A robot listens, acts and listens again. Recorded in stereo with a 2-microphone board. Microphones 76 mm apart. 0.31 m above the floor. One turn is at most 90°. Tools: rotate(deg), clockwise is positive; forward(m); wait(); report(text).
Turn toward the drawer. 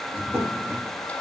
rotate(30)
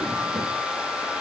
wait()
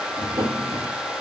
rotate(90)
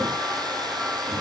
rotate(30)
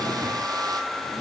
wait()
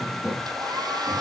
rotate(15)
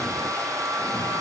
wait()
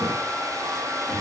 wait()
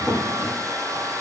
report("Found it: a drawer, straight ahead.")